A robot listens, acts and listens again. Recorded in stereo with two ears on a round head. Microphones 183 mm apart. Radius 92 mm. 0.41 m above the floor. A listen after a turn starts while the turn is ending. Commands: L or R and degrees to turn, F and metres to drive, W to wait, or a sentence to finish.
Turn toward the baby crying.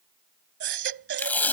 R60
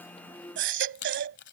R60
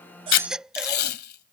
Found it: a baby crying, straight ahead.